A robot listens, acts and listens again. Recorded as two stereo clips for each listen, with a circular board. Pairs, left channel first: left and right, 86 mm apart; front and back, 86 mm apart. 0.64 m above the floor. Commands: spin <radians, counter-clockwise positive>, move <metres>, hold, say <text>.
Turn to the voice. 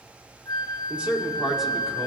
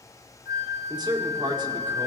spin -3.05
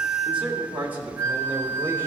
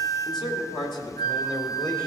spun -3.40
spin -0.44
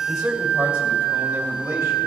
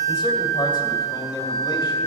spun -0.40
hold
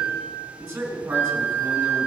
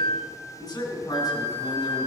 spin -0.35
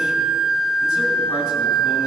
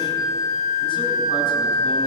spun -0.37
hold
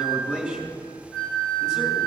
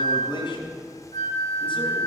say Facing the man speaking, 2 to 4 m away.